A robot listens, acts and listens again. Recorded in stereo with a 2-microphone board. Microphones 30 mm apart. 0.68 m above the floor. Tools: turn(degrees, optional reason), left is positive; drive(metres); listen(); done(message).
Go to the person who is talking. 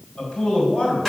turn(degrees=45, reason="The man speaking: about 45° left or 135° left.")
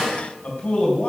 turn(degrees=90, reason="So it is at 90° left.")
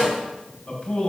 turn(degrees=35, reason="The man speaking is now 35° left.")
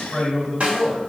drive(metres=1.0)
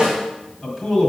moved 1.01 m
drive(metres=1.0)
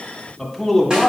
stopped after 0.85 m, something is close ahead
done("I am next to the man speaking.")